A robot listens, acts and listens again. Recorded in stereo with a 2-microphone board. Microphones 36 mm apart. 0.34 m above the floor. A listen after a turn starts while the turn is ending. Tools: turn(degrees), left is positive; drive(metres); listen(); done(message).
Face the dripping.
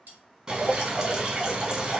turn(degrees=-25)
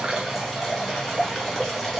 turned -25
done("Facing the dripping, 1 to 2 m away.")